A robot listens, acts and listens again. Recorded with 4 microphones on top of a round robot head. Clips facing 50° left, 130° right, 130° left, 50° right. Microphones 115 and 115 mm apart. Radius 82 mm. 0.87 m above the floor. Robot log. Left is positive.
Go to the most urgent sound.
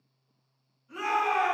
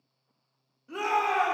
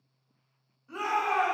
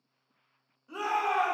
note: The shout: 125° right.
cmd yaw -125
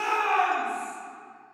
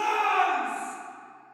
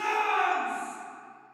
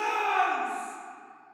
note: The shout is now 60° right.
cmd yaw -60
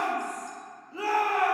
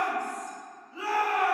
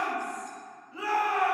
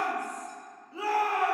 note: The shout is now 10° left.
cmd yaw +10
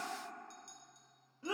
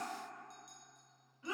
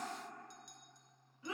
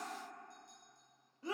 cmd fwd 1.0
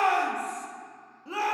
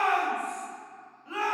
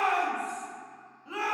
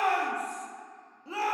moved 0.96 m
cmd fwd 1.0
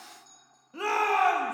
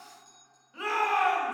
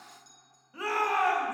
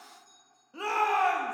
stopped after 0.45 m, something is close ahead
end: Arrived at the shout, straight ahead.